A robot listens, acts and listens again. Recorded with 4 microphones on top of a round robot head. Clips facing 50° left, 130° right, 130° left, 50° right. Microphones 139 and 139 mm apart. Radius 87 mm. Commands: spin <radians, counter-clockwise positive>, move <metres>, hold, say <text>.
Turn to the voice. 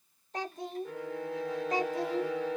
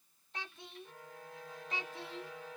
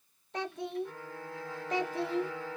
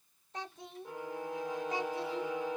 spin 1.75
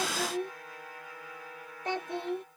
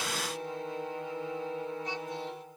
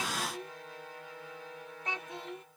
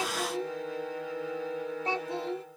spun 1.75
spin 0.17
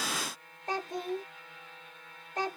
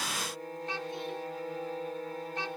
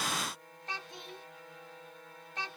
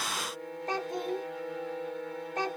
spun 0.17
say Found it: a child speaking, straight ahead.